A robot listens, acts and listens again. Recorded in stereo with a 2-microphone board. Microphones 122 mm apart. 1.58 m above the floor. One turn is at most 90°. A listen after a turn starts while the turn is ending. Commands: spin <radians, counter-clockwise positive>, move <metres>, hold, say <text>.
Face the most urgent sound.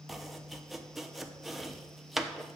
hold
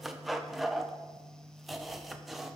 hold
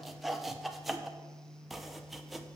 say I can't make out anything urgent, only chopping.